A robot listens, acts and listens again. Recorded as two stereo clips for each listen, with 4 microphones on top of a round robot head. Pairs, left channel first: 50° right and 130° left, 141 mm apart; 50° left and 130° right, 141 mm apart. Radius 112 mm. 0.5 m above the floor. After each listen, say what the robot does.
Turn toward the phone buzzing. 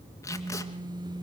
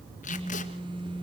Turn 175° right.
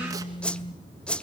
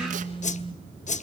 Found it: a phone buzzing, straight ahead.